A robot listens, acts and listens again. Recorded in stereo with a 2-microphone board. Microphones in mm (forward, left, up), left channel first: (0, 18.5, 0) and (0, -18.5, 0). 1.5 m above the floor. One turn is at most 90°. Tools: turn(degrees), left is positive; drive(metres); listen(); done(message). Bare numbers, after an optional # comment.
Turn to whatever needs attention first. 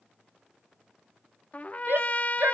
# The shout: about 70° right or 110° right.
turn(-70)
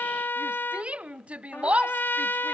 # So it is at 35° right.
turn(-35)
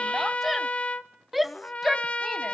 done("Found it: a shout, straight ahead, under 1 m away.")